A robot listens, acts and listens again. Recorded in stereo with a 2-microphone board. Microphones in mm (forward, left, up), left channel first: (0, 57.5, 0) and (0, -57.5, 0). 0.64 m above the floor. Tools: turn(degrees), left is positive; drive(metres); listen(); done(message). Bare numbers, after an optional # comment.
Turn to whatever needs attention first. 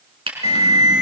# The alarm: about 75° left or 105° left.
turn(75)
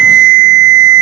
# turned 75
# So it is at 10° left.
turn(10)
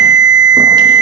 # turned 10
done("Facing the alarm.")